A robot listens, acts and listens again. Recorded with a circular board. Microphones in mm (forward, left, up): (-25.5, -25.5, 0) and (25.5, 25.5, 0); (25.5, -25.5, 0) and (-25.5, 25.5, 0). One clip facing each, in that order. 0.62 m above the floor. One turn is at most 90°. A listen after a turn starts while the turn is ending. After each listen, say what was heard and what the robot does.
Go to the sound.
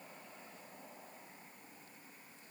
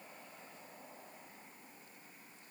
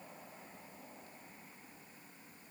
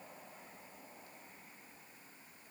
Keep listening.
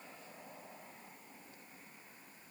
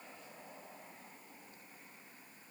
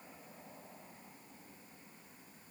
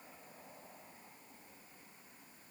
Keep listening.
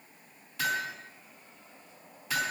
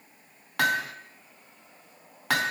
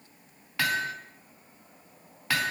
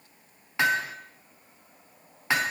The hammering: 65° left. Turn 65° left.
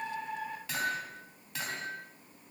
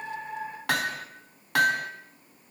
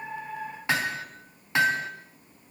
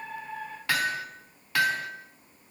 The hammering is now 20° left. Turn 20° left.
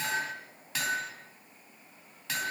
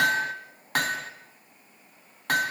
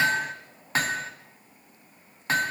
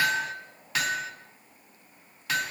Drive 1.0 m forward.
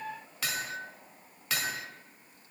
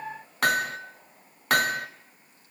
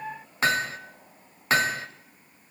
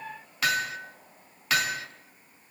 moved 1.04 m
The hammering is now 10° left. Turn 10° left.
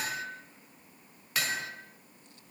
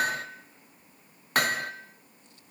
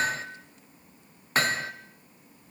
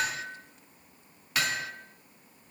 Drive 1.0 m forward.
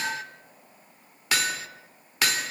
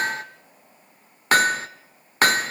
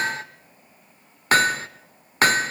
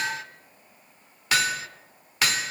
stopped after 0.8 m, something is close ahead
Arrived at the hammering, straight ahead.